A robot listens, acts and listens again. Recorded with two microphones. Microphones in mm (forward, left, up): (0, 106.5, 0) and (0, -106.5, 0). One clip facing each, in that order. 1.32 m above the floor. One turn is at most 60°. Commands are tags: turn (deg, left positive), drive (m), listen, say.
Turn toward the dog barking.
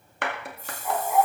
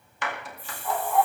<turn deg="30"/>
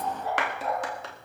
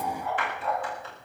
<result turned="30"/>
<turn deg="60"/>
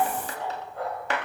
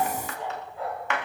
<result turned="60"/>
<turn deg="60"/>
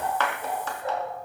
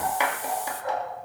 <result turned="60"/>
<turn deg="30"/>
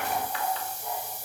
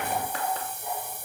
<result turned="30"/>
<say>Found it: a dog barking, straight ahead.</say>